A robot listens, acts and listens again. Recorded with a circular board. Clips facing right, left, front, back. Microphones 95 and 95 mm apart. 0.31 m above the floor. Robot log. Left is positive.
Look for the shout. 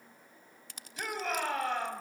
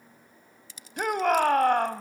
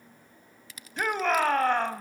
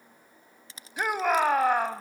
note: The shout: 100° left.
cmd yaw +100
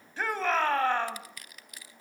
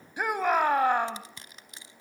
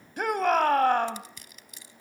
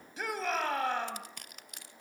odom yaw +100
note: The shout is now 15° left.
cmd yaw +15
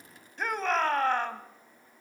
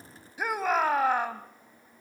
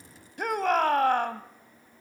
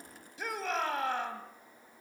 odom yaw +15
note: The shout is now 10° left.
cmd yaw +10
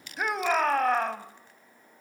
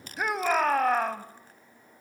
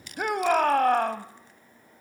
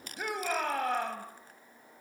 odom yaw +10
end: Found it: a shout, straight ahead, 1 to 2 m away.